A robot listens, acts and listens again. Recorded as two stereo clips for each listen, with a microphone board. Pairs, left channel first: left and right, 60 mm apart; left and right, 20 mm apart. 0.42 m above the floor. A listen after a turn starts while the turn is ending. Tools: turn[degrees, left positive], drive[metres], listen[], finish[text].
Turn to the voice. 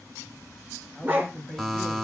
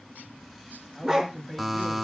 Action: turn[30]
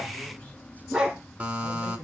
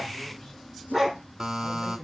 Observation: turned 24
Thought: So it is at 155° left.
Action: turn[155]
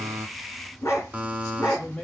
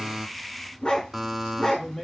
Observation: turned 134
Thought: The man speaking is now 20° left.
Action: turn[20]
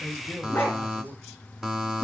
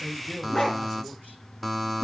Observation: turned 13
Action: finish[Facing the man speaking, 1 to 2 m away.]